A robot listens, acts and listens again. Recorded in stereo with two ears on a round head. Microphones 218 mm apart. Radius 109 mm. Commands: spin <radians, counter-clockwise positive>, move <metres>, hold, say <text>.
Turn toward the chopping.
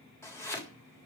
spin 0.52
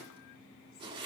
spin -0.35
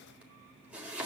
say Facing the chopping.